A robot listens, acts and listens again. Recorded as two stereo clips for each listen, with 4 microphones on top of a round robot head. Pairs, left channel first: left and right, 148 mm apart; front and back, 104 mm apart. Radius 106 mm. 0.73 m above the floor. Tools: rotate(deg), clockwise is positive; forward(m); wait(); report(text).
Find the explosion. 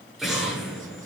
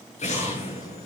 report("Found it: an explosion, straight ahead.")